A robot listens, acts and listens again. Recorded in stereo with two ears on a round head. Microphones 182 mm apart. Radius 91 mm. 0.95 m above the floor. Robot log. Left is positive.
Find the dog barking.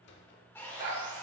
note: The dog barking: about 65° right or 115° right.
cmd yaw -65
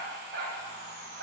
note: So it is at 60° right.
cmd yaw -60
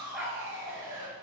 end: Facing the dog barking.